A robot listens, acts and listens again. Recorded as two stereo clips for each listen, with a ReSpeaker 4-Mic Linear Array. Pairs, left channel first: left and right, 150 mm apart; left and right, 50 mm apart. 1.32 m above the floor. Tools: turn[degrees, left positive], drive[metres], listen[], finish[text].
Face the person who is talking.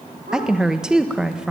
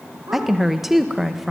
Action: turn[-30]
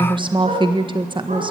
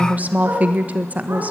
Thought: So it is at 145° right.
Action: turn[-145]
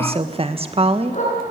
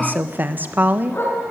Thought: The woman speaking is now 40° right.
Action: turn[-40]
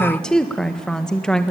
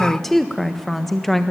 Action: finish[Facing the woman speaking.]